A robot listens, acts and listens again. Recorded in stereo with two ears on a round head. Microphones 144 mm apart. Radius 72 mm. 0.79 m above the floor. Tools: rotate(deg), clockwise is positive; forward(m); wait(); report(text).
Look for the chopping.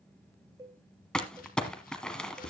rotate(-55)
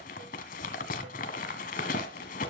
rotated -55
wait()
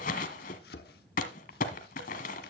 rotate(-65)
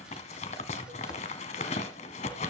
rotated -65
wait()
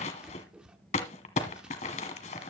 report("Found it: chopping, straight ahead, 1 to 2 m away.")